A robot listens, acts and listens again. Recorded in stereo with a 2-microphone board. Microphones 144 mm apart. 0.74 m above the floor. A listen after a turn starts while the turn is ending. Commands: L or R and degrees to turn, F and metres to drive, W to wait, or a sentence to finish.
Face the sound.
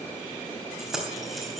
R30
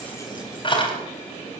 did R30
L40
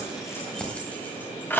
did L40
L15
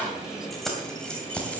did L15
L10
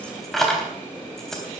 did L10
Facing the keys jangling.